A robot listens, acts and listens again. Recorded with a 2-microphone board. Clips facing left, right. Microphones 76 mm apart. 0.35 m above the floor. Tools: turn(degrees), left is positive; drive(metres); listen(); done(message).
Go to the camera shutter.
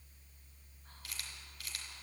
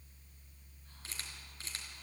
turn(degrees=-30)
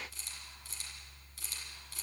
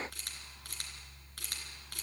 turn(degrees=-120)
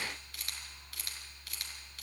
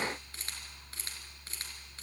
turn(degrees=-30)
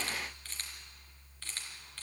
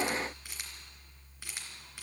turn(degrees=-10)
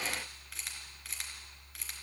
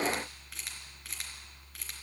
drive(metres=1.0)
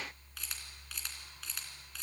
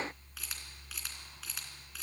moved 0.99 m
drive(metres=1.0)
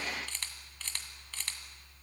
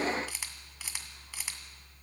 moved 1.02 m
turn(degrees=-10)
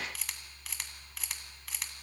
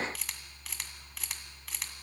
drive(metres=1.0)
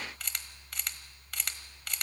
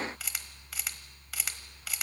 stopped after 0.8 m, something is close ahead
done("I am next to the camera shutter.")